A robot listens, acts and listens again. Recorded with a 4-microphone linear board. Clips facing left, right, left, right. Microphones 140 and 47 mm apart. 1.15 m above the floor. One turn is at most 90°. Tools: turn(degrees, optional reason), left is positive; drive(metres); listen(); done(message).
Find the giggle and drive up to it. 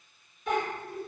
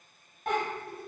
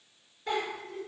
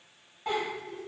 turn(degrees=-65, reason="The giggle: about 65° right or 115° right.")
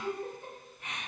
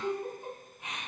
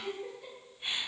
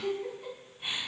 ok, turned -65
turn(degrees=-20, reason="So it is at 20° right.")
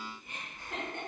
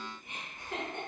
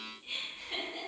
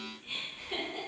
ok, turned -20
drive(metres=1.0)
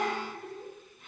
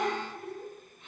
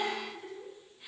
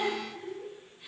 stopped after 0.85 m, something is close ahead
turn(degrees=10, reason="The giggle is now 10° left.")
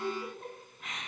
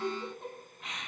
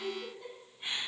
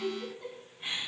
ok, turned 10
done("Arrived at the giggle, straight ahead.")